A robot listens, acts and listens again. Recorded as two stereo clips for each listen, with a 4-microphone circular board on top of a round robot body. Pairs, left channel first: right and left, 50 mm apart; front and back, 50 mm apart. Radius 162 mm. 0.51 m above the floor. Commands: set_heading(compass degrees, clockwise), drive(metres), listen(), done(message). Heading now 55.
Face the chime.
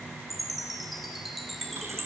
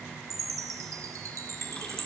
set_heading(235)
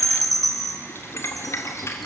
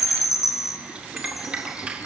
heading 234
done("Facing the chime, 1 to 2 m away.")